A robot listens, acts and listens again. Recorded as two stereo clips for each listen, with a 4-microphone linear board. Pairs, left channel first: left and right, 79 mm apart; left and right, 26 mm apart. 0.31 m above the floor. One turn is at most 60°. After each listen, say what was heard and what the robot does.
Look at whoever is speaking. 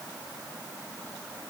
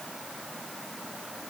Keep listening.
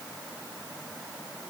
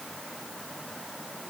Keep listening.
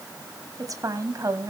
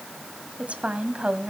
The woman speaking: about 45° right or 135° right. Turn 45° right.
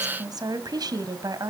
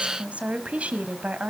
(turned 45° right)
So it is at 75° right. Turn 60° right.
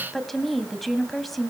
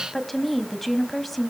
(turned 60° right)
Found it: a woman speaking, straight ahead.